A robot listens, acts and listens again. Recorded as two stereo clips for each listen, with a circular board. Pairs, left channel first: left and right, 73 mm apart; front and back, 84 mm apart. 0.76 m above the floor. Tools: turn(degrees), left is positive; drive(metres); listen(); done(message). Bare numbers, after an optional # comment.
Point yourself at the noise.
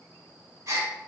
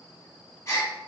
# The gasp: 50° right.
turn(-50)
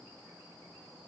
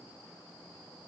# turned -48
done("Facing where the gasp came from. I can't hear it now.")